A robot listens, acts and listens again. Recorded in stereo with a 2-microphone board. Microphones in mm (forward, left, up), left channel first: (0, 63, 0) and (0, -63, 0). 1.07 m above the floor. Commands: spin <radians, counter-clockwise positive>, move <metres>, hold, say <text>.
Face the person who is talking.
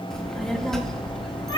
spin 0.52
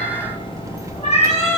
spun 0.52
spin -0.44
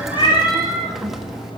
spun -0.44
say Found it: a child speaking, straight ahead.